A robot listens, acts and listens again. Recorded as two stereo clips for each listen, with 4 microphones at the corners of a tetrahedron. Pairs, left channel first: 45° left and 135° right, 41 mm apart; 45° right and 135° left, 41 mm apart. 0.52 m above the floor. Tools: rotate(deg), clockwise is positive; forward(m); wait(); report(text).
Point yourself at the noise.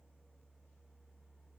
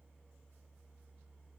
wait()
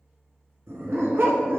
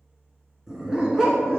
rotate(155)
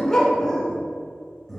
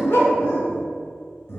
rotate(40)
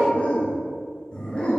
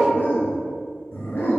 rotate(20)
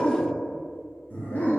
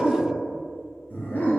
report("Found it: a dog barking, straight ahead.")